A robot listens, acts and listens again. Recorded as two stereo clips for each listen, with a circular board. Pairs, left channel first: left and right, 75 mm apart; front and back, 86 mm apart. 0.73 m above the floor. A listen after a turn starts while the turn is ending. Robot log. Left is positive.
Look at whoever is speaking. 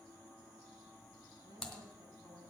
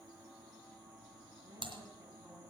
note: The woman speaking: 115° right.
cmd yaw -115
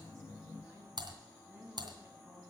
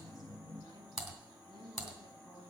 note: The woman speaking is now 25° right.
cmd yaw -25
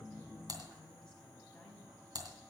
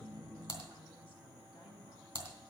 cmd idle
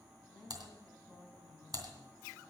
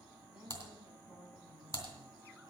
note: The woman speaking is now 10° left.
cmd yaw +10
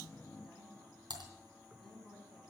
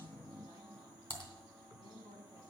end: Facing the woman speaking, over 4 m away.